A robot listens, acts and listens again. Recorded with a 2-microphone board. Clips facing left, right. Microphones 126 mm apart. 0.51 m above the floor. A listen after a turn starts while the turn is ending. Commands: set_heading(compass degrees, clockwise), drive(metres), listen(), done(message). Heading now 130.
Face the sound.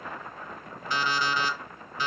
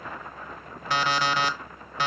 set_heading(200)
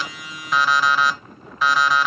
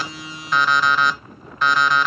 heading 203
done("Found it: an alarm clock, straight ahead.")